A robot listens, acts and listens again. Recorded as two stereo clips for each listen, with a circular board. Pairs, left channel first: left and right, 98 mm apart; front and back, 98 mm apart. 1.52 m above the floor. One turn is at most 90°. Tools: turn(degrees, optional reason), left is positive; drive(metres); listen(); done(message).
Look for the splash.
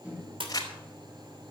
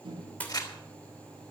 turn(degrees=-75, reason="The splash: 75° right.")
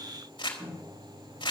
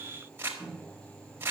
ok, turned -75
done("I heard a splash from this way, but can't make it out now.")